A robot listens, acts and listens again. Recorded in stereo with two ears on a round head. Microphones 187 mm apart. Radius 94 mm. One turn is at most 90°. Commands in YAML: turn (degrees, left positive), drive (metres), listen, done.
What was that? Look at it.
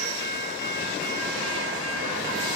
listen: true
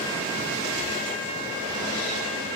listen: true
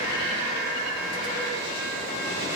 done: "I can't make out anything to turn to."